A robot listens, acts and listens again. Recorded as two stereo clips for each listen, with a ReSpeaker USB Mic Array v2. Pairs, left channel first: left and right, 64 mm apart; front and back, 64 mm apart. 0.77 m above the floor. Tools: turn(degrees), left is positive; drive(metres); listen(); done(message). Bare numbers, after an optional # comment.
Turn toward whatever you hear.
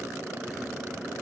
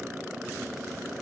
listen()
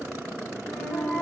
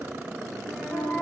# The flute: 90° left.
turn(90)
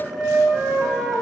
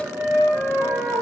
# The flute is now 15° right.
turn(-15)
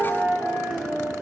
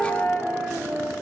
done("Found it: a flute, straight ahead.")